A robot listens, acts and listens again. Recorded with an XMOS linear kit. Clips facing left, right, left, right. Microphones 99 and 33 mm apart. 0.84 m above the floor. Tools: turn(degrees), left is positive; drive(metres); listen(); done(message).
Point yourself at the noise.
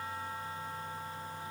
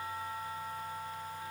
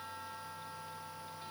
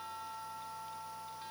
listen()
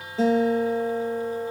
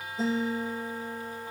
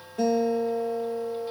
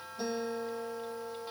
turn(degrees=90)
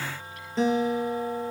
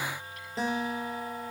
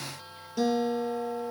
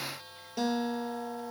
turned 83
done("Facing the guitar.")